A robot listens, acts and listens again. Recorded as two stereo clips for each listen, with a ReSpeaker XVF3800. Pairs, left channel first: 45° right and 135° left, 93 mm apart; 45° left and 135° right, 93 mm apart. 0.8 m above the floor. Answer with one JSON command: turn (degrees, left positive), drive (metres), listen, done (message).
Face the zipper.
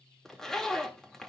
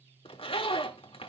{"turn": 40}
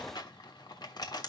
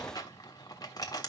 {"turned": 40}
{"done": "Found it: a zipper, straight ahead, 1 to 2 m away."}